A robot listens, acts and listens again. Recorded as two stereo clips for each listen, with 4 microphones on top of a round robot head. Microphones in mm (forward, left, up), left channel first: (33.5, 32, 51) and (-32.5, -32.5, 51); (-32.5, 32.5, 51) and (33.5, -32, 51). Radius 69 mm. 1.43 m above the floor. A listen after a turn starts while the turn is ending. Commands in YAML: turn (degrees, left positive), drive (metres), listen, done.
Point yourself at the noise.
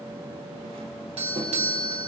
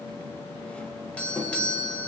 turn: -145
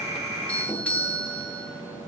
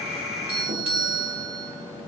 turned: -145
turn: -30
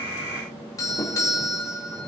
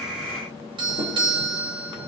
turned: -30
turn: -10
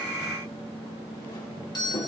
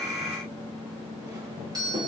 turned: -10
done: "Facing the doorbell."